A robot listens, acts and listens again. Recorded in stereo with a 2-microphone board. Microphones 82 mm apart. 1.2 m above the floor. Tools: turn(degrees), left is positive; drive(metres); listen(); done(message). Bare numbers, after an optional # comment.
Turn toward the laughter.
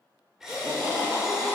turn(-30)
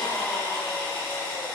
# So it is at 40° left.
turn(40)
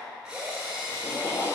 # The laughter is now 50° left.
turn(50)
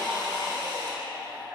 done("Found it: laughter, straight ahead.")